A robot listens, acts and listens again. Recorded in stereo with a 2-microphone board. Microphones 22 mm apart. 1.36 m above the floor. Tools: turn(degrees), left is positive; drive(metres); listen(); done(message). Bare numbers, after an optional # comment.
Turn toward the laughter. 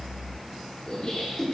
# The laughter: about 45° left or 135° left.
turn(45)
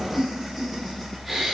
done("Facing the laughter.")